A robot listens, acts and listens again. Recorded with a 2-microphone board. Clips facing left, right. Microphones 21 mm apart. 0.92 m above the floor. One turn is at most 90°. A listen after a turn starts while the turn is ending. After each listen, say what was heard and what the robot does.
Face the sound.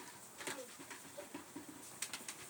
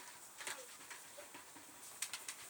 Keep listening.
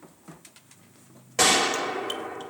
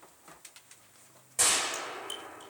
The gunshot: about 40° left or 140° left. Turn 40° left.
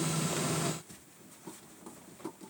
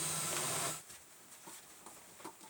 Keep listening.
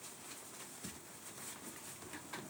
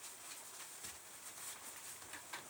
I heard a gunshot, but can't make it out now. It was about straight ahead or 100° left.